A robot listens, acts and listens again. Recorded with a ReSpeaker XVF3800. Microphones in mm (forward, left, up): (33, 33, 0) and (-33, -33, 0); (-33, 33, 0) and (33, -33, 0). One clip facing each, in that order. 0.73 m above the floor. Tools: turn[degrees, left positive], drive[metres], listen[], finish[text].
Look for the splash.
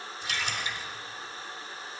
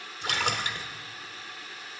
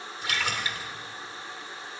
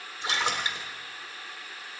Thought: The splash: 110° right.
Action: turn[-110]
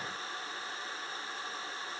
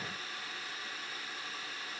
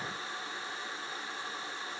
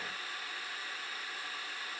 Action: finish[I heard a splash from this way, but can't make it out now.]